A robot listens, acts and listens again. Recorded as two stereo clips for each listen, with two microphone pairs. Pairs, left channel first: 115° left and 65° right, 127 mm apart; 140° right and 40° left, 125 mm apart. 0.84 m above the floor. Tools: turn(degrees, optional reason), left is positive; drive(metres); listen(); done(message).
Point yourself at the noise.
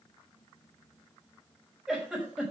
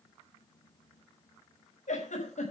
turn(degrees=-150, reason="The giggle: 150° right.")
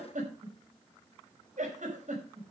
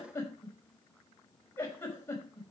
turn(degrees=-65, reason="The giggle is now 65° right.")
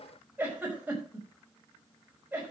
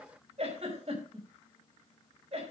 turn(degrees=10, reason="The giggle is now 10° left.")
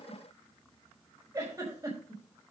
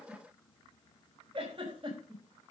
done("Found it: a giggle, straight ahead, over 4 m away.")